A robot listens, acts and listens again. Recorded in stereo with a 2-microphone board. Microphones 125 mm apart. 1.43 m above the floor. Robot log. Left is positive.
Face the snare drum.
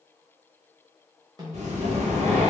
note: The snare drum: about 30° right or 150° right.
cmd yaw -30
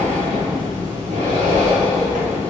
cmd idle
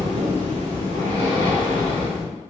cmd idle
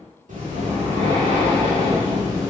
end: I heard a snare drum, but can't make it out now. It was about straight ahead or 120° right.